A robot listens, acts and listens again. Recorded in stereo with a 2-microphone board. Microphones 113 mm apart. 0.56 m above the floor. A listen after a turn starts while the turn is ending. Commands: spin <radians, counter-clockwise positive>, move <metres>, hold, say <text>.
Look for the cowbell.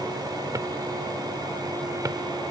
hold
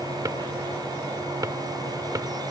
hold
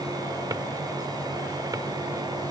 say I can't make out a cowbell to turn to.